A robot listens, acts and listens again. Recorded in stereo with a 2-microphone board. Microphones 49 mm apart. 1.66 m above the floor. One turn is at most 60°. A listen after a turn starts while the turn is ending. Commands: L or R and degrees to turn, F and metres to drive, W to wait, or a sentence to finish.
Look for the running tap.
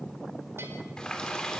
L15
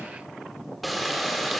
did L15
Facing the running tap, 2 to 4 m away.